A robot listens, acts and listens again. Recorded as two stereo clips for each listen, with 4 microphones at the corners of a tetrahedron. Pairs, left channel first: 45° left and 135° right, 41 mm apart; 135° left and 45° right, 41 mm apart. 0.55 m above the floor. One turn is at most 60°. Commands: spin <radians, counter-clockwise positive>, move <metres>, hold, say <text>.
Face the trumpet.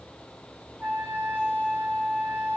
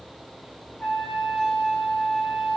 spin 1.05
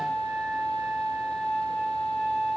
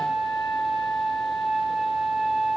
spin 1.05
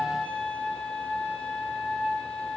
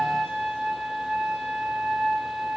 spin 0.79
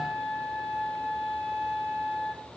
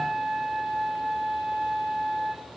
spin 0.26
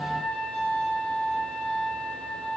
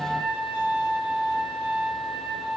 say Found it: a trumpet, straight ahead.